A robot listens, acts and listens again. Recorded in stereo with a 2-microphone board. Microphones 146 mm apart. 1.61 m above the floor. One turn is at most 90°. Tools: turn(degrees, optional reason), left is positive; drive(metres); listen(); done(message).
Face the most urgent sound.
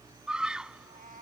turn(degrees=-30)
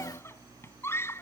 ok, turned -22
turn(degrees=15, reason="So it is at 15° left.")
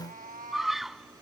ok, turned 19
done("Facing the scream.")